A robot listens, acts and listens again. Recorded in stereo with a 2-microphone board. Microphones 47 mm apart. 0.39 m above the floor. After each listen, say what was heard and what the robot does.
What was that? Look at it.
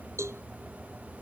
Turn 90° right.
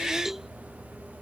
So it is at 10° right. Turn 10° right.
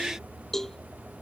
Found it: a cowbell, straight ahead.